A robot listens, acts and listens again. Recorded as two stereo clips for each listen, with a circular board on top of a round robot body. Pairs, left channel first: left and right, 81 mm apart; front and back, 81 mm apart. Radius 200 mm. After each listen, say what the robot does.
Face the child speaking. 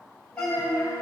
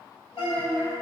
Turn 45° left.
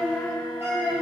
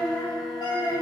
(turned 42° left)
Turn 20° right.
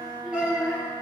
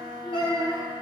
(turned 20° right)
Turn 20° right.
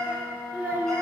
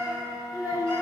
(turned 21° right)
Turn 35° right.
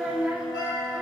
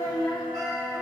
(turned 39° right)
Turn 15° right.
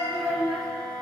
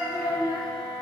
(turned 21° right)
Facing the child speaking, 1 to 2 m away.